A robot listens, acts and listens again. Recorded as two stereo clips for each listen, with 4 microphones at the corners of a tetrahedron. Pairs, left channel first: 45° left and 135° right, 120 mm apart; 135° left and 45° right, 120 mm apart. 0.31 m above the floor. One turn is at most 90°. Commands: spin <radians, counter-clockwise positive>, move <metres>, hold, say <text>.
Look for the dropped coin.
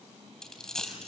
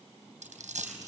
spin -0.70
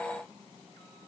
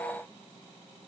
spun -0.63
say I heard a dropped coin from this way, but can't make it out now.